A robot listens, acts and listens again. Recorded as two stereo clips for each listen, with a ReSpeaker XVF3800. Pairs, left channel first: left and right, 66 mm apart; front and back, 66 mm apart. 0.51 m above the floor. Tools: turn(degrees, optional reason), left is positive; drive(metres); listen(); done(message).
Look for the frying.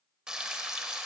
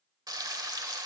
turn(degrees=-170, reason="The frying: 170° right.")
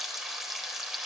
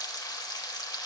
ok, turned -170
done("Facing the frying.")